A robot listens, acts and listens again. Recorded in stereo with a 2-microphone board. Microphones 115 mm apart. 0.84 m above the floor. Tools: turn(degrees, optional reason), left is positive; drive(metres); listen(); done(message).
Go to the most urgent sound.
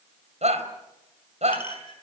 turn(degrees=-90)
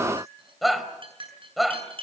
drive(metres=1.0)
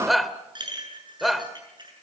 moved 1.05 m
drive(metres=1.0)
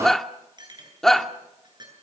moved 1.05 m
drive(metres=1.0)
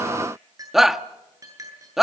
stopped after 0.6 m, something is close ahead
done("I am next to the shout.")